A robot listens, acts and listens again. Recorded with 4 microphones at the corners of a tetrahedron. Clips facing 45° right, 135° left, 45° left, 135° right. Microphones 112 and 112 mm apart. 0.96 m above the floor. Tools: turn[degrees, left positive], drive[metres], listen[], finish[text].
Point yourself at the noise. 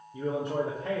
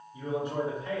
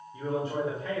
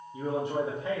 Thought: The man speaking: 70° right.
Action: turn[-70]
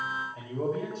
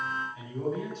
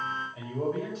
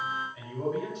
Action: finish[Found it: a man speaking, straight ahead, 2 to 4 m away.]